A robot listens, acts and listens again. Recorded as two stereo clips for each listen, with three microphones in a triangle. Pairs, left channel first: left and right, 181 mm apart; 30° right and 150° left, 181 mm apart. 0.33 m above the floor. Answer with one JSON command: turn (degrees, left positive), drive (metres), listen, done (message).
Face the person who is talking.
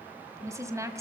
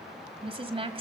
{"turn": -160}
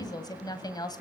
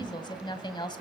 {"turn": 25}
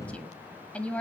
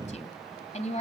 {"turn": 10}
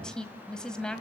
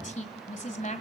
{"done": "Found it: a woman speaking, straight ahead, 1 to 2 m away."}